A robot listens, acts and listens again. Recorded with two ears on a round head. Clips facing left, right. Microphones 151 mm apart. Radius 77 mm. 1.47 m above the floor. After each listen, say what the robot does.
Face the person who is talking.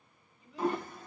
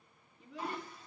Turn 50° right.
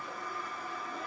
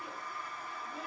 Keep listening.
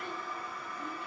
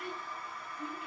Keep listening.
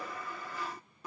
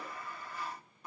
I heard a child speaking, but can't make it out now. It was about straight ahead or 80° right.